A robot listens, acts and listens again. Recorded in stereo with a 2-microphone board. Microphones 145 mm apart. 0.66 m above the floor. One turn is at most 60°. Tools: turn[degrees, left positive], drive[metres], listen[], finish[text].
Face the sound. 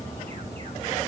Action: listen[]
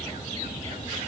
Action: listen[]
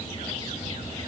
Action: finish[I can't make out anything.]